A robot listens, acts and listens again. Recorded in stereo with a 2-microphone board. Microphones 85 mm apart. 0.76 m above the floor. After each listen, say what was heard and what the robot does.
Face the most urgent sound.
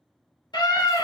The scream: about 70° left or 110° left. Turn 70° left.
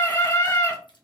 So it is at 35° left. Turn 35° left.
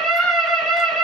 Facing the scream, 2 to 4 m away.